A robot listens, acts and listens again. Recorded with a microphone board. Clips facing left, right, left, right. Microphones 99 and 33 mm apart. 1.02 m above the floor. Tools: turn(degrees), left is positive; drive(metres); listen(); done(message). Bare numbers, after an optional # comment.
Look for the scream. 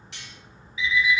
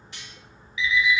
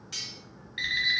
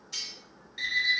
listen()
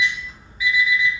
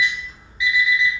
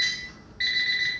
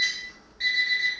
listen()
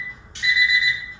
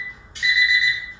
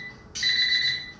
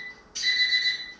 done("I can't make out a scream to turn to.")